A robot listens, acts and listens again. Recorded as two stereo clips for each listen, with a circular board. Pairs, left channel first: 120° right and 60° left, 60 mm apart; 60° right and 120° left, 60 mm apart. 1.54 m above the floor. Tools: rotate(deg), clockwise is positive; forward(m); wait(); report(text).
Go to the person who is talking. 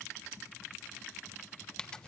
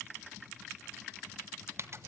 wait()
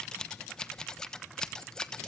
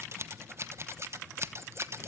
wait()
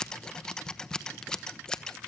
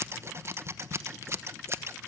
report("I can't make out anyone speaking, only scissors.")